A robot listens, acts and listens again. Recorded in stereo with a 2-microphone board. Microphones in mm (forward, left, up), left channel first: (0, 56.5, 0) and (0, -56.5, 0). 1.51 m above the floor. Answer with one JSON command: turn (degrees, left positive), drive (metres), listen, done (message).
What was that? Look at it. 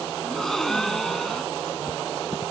{"turn": 30}
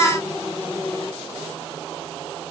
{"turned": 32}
{"listen": true}
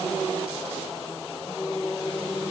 {"done": "I heard a gasp, but can't make it out now. It was about 30° right or 145° left."}